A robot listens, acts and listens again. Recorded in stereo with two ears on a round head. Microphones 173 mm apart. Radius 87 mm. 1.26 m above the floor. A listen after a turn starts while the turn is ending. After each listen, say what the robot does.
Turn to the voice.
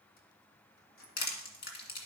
Keep listening.
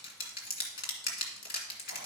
Keep listening.
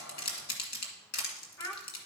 Turn 15° left.
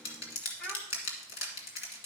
Keep listening.
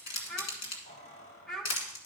Facing the child speaking.